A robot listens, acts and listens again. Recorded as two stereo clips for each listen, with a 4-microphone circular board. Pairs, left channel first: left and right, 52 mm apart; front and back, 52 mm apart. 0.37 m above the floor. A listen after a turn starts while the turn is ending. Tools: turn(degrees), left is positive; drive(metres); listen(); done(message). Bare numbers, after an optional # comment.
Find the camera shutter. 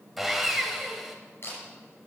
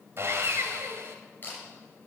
# The camera shutter: 50° left.
turn(50)
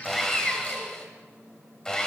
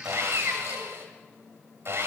listen()
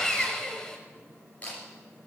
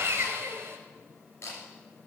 # The camera shutter is now 30° left.
turn(30)
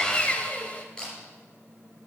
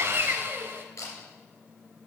# The camera shutter is now 15° left.
turn(15)
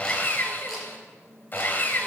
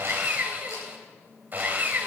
listen()
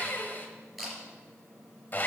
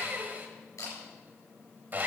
done("Found it: a camera shutter, straight ahead, over 4 m away.")